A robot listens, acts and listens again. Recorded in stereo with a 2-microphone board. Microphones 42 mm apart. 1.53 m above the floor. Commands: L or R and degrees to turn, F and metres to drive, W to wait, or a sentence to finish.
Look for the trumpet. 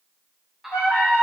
L90
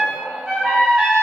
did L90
Facing the trumpet.